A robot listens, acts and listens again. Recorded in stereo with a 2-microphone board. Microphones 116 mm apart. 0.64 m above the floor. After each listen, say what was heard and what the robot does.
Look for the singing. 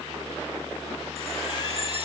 Keep listening.
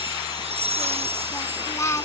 The singing: about 25° left or 155° left. Turn 25° left.
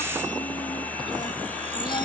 Keep listening.
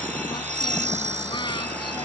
Keep listening.
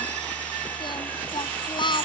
So it is at 135° left. Turn 135° left.
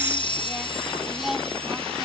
Found it: singing, straight ahead.